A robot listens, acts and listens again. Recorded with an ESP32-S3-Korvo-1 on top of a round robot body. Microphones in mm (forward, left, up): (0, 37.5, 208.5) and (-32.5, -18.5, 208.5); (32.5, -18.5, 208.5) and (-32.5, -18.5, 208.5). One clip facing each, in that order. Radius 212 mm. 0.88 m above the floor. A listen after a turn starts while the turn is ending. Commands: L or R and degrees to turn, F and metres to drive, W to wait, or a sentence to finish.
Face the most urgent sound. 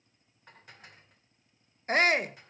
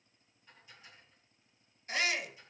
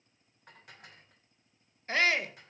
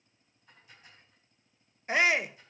L105
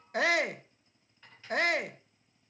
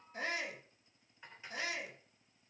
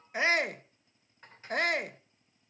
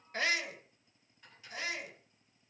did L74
L30
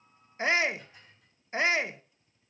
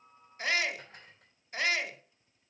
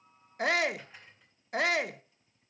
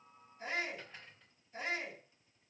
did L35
Found it: a shout, straight ahead.